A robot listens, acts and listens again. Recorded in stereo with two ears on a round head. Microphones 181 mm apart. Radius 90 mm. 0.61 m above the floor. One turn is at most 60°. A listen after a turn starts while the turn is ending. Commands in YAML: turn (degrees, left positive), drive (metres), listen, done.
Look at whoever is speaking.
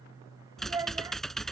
turn: -15
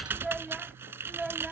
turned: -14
turn: 30
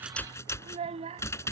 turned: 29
turn: -30
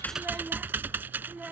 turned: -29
done: "Facing the child speaking."